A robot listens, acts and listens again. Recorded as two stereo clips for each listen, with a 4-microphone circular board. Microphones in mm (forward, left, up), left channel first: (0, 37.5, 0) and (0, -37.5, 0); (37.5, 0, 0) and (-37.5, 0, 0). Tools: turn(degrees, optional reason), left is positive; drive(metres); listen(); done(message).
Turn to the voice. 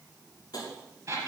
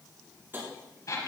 listen()
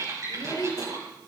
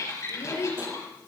turn(degrees=50, reason="The child speaking: 50° left.")
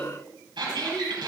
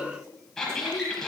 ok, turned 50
turn(degrees=10, reason="The child speaking is now 10° left.")
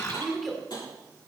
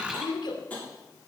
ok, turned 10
done("Facing the child speaking, 2 to 4 m away.")